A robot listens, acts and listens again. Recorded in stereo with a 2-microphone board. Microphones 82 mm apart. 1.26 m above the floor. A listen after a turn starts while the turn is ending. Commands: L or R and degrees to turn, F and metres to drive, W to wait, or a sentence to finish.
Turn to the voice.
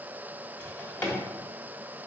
W
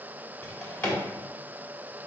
W
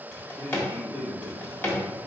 L90
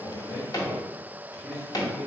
R10
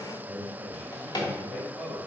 Facing the man speaking, 1 to 2 m away.